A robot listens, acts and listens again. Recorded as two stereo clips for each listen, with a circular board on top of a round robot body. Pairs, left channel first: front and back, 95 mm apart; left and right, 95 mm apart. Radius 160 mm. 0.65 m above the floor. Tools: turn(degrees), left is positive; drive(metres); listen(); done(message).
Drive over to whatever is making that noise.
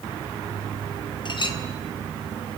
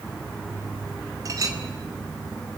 turn(degrees=-35)
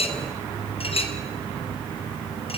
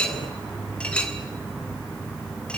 turn(degrees=10)
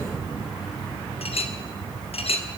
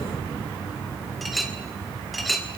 drive(metres=1.0)
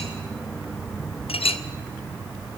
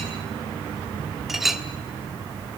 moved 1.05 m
drive(metres=1.0)
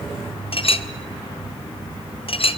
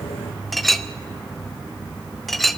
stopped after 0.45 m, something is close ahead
done("I am next to the clink.")